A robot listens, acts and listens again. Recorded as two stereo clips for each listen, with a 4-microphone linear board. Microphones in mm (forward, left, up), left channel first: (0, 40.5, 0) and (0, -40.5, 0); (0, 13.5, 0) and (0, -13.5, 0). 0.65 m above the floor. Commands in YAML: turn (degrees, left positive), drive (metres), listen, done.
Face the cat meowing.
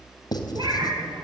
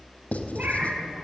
turn: -75
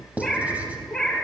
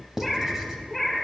done: "Found it: a cat meowing, straight ahead, over 4 m away."